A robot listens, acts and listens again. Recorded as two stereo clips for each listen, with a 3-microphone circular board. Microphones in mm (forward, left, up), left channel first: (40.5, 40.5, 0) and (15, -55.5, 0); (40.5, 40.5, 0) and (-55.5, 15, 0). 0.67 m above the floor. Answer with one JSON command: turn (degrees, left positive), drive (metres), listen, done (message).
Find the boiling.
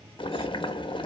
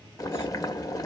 {"turn": 65}
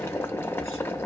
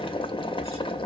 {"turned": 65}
{"turn": 10}
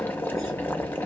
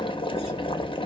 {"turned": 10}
{"done": "Facing the boiling, under 1 m away."}